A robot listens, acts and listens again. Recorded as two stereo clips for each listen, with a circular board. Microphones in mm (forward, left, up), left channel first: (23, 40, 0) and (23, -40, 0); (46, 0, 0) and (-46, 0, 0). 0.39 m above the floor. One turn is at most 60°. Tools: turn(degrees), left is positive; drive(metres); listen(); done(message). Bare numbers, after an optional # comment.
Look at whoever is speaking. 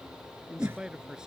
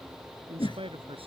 # The man speaking: 170° right.
turn(-60)
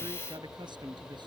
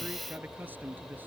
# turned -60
# The man speaking is now 110° right.
turn(-60)
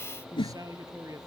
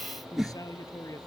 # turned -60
# The man speaking is now 50° right.
turn(-50)
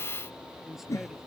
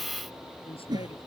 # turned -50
listen()
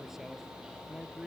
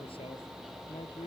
done("Facing the man speaking.")